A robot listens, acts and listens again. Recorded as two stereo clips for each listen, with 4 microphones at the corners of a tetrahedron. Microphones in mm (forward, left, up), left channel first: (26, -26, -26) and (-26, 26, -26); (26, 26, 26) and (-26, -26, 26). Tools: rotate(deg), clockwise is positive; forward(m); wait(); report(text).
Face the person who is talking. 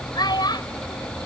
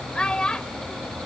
rotate(35)
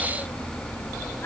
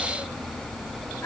wait()
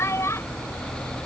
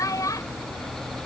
report("Found it: a child speaking, straight ahead.")